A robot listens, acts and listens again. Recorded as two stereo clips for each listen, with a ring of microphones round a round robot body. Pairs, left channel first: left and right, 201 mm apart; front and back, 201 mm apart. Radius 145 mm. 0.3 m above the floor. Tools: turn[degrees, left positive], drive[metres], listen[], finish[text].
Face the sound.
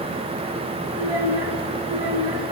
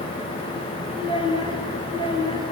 Thought: The child speaking: 110° right.
Action: turn[-110]
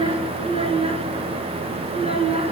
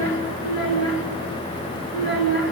Thought: The child speaking is now 30° right.
Action: turn[-30]
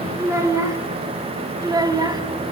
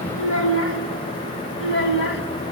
Thought: The child speaking is now 20° right.
Action: turn[-20]
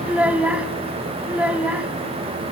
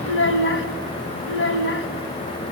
Action: finish[Found it: a child speaking, straight ahead.]